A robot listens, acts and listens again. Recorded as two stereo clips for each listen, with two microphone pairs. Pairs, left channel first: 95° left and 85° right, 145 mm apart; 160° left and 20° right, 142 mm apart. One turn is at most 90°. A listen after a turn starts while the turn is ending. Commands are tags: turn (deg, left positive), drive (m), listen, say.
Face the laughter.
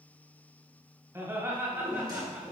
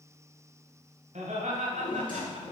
<turn deg="-15"/>
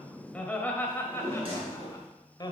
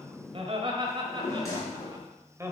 <turn deg="45"/>
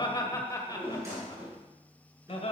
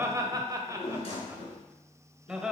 <turn deg="65"/>
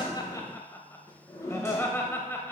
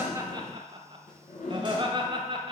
<turn deg="20"/>
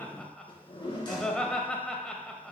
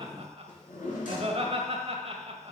<turn deg="10"/>
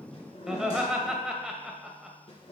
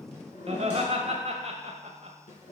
<say>Found it: laughter, straight ahead, 1 to 2 m away.</say>